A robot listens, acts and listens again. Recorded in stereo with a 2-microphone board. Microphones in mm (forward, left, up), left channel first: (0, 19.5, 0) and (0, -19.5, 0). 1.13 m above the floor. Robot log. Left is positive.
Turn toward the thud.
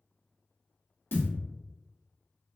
note: The thud: about 60° left or 120° left.
cmd yaw +60
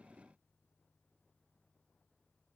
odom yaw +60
cmd idle
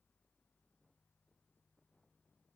end: I heard a thud, but can't make it out now. It was about straight ahead or 60° left.